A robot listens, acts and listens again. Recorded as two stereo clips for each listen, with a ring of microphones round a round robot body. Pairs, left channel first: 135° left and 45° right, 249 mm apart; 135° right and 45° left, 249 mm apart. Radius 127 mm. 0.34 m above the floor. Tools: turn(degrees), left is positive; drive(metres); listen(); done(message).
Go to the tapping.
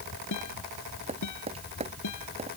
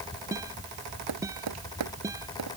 turn(degrees=20)
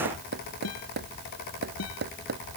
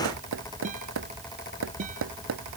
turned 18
drive(metres=1.0)
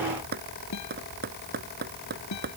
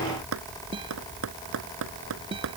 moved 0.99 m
turn(degrees=10)
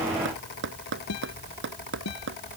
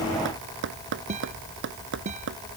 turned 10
drive(metres=1.0)
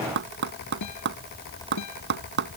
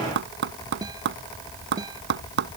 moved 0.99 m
drive(metres=1.0)
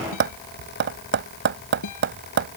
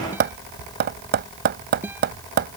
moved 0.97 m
drive(metres=1.0)
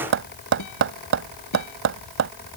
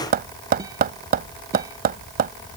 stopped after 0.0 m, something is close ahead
turn(degrees=-10)
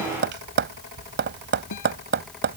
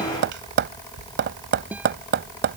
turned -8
done("Arrived at the tapping, straight ahead.")